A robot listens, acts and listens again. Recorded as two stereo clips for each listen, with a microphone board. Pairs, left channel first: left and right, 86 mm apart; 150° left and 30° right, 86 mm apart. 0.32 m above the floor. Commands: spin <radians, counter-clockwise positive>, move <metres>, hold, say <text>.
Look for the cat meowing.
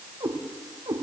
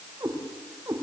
spin -1.40
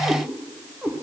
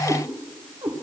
spin -0.26
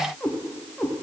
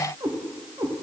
say Facing the cat meowing, over 4 m away.